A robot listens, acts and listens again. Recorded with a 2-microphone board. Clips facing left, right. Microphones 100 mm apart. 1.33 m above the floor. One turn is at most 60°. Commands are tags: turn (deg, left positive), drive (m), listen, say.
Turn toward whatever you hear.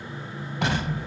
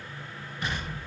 <turn deg="60"/>
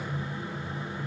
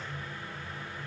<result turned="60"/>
<listen/>
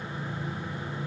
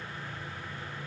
<say>I heard an explosion, but can't make it out now. It was about 10° left or 50° left.</say>